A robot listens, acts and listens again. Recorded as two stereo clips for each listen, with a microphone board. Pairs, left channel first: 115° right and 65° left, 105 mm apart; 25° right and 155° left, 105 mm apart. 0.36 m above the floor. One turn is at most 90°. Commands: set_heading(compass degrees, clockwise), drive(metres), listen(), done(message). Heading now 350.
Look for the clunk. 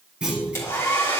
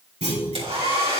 set_heading(260)
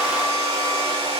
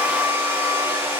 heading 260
set_heading(205)
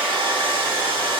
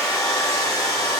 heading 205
done("I heard a clunk from this way, but can't make it out now.")